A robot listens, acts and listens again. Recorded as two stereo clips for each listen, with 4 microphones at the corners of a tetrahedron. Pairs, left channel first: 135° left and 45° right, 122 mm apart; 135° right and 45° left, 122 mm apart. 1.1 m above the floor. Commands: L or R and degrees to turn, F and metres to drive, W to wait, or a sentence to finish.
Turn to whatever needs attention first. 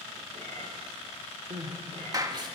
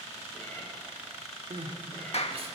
Facing the crying.